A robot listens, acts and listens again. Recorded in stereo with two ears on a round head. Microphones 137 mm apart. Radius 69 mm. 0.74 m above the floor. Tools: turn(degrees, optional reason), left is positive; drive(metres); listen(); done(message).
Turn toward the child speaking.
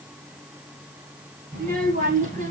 turn(degrees=-50, reason="The child speaking: about 50° right or 130° right.")
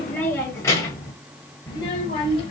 turn(degrees=35, reason="So it is at 35° left.")
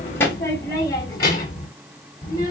turn(degrees=25, reason="The child speaking is now 25° left.")
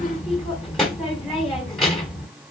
done("Found it: a child speaking, straight ahead, 2 to 4 m away.")